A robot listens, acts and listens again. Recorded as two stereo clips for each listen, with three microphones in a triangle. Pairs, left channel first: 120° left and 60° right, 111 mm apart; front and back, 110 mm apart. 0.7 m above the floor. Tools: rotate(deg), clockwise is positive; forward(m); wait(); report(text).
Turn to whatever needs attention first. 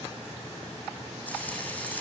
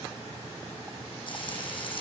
wait()
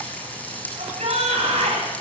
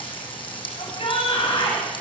rotate(40)
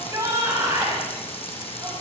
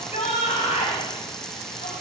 report("Found it: a shout, straight ahead, over 4 m away.")